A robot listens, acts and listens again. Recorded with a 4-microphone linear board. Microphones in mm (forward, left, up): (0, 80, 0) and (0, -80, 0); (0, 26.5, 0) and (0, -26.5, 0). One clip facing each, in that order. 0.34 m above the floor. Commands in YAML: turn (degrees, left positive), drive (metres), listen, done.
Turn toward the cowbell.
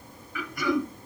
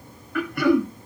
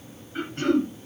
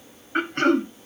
listen: true
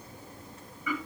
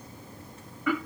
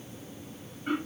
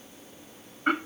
listen: true
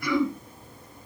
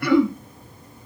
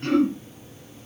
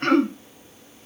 done: "I can't make out a cowbell to turn to."